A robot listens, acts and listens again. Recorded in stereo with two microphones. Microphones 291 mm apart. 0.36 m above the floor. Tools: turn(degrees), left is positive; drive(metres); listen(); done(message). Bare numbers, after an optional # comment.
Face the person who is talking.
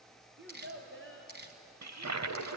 # The child speaking: about 45° right or 135° right.
turn(-45)
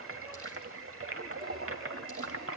listen()
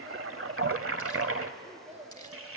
# So it is at 20° right.
turn(-20)
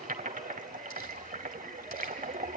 listen()
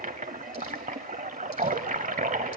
listen()
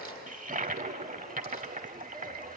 done("Facing where the child speaking came from. I can't hear it now.")